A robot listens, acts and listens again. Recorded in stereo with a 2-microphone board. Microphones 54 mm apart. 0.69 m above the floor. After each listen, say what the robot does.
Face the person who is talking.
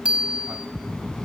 Turn 30° left.
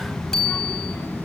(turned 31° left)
Turn 140° left.
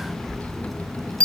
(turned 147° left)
Facing the child speaking, over 4 m away.